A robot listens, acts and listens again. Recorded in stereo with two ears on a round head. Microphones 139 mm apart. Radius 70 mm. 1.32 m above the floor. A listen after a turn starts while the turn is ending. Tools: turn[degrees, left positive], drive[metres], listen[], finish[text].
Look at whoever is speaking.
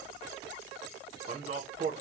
Thought: The man speaking: about 45° right or 135° right.
Action: turn[-45]
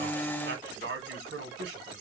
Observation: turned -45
Thought: So it is at 90° right.
Action: turn[-90]
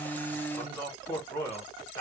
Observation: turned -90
Thought: The man speaking is now 10° left.
Action: turn[10]
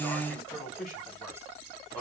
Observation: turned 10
Action: finish[Found it: a man speaking, straight ahead, 1 to 2 m away.]